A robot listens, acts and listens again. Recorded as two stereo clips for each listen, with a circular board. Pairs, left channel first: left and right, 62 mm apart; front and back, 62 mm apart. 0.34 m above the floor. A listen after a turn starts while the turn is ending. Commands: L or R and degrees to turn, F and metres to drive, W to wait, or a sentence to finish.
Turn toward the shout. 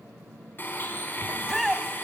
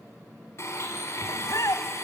Found it: a shout, straight ahead.